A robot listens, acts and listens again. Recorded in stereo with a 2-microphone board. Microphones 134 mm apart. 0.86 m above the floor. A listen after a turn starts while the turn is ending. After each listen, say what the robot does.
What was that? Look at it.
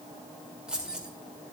Turn 30° right.
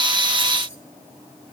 Keep listening.
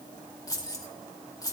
Turn 25° left.
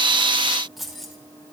Found it: keys jangling, straight ahead.